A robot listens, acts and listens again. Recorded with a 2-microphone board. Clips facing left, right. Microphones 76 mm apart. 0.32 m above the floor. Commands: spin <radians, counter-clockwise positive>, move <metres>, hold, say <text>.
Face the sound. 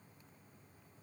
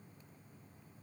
hold
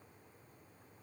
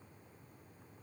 hold
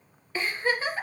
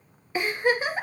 spin -0.26
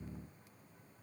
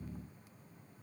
hold
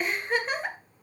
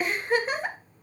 say Facing the giggle, 1 to 2 m away.